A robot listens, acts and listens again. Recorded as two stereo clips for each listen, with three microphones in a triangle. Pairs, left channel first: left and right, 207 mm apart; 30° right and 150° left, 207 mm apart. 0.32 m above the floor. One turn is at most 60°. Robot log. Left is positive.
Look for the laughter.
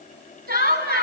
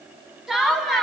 note: The laughter: 120° right.
cmd yaw -60
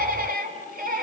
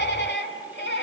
note: The laughter is now 50° right.
cmd yaw -50
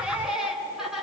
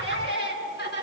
end: Found it: laughter, straight ahead, over 4 m away.